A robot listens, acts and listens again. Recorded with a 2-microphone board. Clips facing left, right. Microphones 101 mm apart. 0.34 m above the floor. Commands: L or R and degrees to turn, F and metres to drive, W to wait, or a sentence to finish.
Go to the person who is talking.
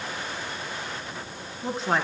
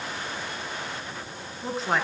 L30
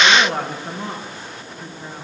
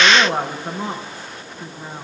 R30
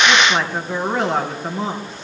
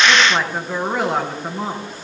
F1.0
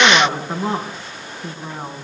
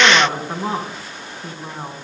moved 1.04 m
F1.0
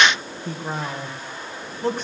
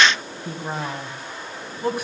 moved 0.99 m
R10
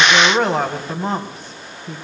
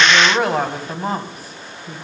F1.0
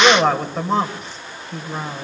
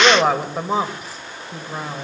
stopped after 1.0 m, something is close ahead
R10
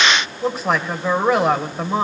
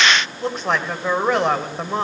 Arrived at the woman speaking, straight ahead.